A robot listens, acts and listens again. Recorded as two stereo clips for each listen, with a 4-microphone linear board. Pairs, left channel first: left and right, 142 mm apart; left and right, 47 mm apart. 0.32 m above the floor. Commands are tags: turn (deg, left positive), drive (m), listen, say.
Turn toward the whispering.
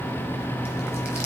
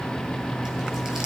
<listen/>
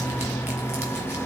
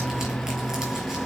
<listen/>
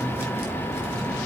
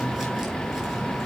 <say>I can't make out whispering.</say>